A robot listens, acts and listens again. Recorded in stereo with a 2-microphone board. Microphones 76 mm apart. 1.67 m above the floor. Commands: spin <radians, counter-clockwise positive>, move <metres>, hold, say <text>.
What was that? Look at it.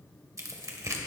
spin -0.79
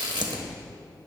spin -1.57
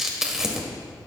spin -0.17
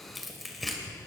say Facing the tearing paper, 1 to 2 m away.